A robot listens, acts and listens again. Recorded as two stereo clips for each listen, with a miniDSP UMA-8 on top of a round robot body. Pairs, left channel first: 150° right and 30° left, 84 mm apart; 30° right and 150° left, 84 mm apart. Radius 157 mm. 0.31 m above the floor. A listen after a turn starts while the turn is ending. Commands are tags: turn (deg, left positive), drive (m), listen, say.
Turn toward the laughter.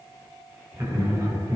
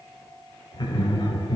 <say>Facing the laughter.</say>